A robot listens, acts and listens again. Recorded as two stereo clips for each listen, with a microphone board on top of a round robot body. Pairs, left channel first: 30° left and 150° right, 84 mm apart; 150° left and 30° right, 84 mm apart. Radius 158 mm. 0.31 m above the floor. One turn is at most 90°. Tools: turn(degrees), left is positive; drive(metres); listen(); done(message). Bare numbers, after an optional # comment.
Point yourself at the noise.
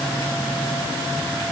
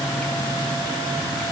listen()
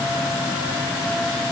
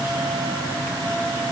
listen()
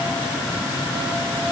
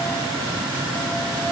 done("I can't make out anything.")